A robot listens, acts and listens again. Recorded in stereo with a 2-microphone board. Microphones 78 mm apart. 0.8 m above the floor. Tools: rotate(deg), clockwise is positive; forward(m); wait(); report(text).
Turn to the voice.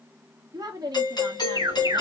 rotate(55)
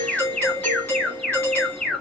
wait()
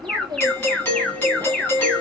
rotate(60)
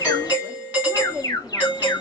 rotate(10)
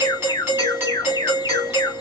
wait()
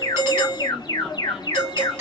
wait()
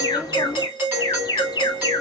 report("Facing where the woman speaking came from. I can't hear it now.")